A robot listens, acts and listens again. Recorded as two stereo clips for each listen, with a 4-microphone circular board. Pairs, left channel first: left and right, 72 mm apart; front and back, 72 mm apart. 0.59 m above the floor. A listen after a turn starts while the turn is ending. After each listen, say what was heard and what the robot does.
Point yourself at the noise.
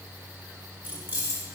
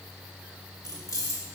The keys jangling: 35° right. Turn 35° right.
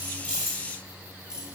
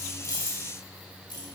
The keys jangling is now 10° right. Turn 10° right.
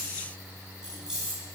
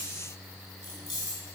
The keys jangling is now 15° right. Turn 15° right.
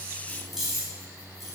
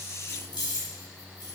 Found it: keys jangling, straight ahead, over 4 m away.